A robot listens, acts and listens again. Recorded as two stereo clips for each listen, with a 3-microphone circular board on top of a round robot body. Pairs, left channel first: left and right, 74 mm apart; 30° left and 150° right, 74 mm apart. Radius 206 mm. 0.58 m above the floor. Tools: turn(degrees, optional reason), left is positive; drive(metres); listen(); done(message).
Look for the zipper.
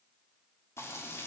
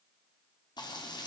listen()
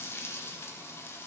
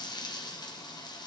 listen()
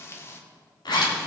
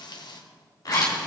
turn(degrees=70, reason="The zipper: 70° left.")
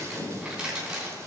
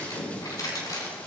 done("Facing the zipper, 2 to 4 m away.")